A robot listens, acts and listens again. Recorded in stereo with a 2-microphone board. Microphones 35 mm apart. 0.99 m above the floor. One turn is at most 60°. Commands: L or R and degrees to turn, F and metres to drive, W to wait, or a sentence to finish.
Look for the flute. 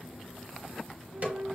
R60
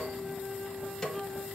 R50
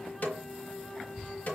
Found it: a flute, straight ahead, 1 to 2 m away.